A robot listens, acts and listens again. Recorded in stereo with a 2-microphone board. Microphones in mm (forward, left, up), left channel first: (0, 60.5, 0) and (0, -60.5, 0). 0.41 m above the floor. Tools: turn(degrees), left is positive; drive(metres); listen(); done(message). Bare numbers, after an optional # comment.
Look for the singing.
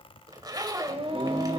# The singing: about 55° right or 125° right.
turn(-55)
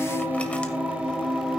done("Facing the singing, 2 to 4 m away.")